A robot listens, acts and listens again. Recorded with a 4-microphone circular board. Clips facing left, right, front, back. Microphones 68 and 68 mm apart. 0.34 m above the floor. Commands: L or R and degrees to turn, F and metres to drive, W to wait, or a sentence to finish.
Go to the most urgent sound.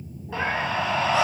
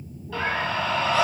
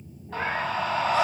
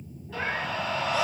L25
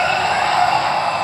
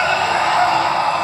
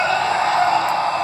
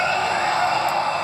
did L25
F1.0
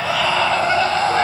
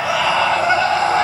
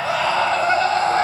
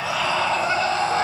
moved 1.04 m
R15
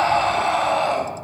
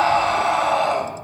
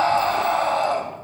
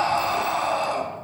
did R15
F1.0
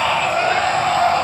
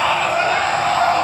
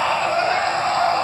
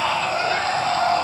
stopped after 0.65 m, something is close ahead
I am next to the scream.